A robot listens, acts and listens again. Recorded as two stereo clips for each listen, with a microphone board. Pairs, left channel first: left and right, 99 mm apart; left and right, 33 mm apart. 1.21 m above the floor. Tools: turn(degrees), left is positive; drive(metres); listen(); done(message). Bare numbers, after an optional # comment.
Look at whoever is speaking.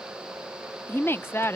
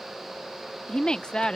# The woman speaking: about 25° left or 155° left.
turn(25)
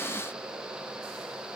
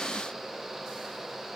listen()
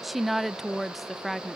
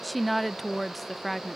done("Found it: a woman speaking, straight ahead.")